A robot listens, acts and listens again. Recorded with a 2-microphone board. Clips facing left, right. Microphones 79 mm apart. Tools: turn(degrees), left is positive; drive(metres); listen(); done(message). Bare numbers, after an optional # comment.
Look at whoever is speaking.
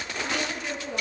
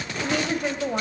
# The woman speaking: about 55° right or 125° right.
turn(-55)
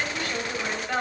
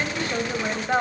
# So it is at 30° right.
turn(-30)
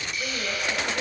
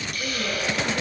listen()
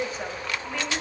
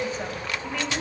done("Found it: a woman speaking, straight ahead.")